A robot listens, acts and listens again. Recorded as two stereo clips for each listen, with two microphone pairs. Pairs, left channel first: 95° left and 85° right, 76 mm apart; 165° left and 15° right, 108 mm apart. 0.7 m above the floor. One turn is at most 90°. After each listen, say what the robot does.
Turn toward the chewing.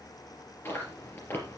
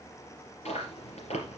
Turn 90° left.
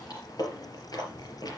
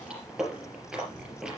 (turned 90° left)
Turn 70° left.
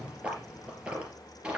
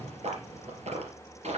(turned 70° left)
Turn 10° right.
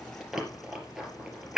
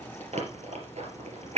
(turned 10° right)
Found it: chewing, straight ahead.